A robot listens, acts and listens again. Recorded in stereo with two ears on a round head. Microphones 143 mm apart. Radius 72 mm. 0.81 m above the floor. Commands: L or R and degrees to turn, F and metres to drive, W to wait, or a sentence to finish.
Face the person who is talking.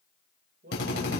R70
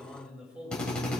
Facing the man speaking.